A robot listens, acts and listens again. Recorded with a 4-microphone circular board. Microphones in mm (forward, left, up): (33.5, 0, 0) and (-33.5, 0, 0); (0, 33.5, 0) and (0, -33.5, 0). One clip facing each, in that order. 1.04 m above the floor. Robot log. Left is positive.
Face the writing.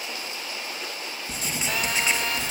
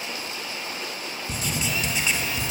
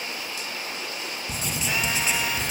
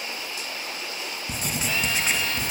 note: The writing: 50° right.
cmd yaw -50
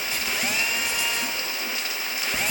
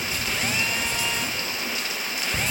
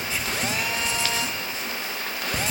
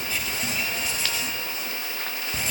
note: The writing is now 20° left.
cmd yaw +20
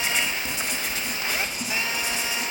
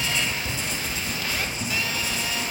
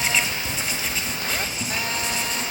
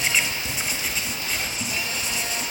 end: Found it: writing, straight ahead, 1 to 2 m away.